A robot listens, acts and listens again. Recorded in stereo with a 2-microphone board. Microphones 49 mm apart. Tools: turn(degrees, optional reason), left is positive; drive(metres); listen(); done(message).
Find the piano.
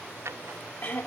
listen()
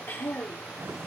listen()
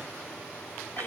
done("I can't make out a piano to turn to.")